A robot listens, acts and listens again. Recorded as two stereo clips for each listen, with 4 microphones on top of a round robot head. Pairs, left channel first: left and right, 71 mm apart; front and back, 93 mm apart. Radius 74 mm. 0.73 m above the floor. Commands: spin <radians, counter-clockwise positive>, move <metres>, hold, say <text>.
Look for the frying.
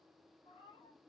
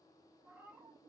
hold
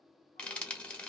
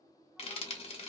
spin 0.26
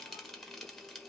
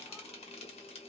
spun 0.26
say Facing the frying, 1 to 2 m away.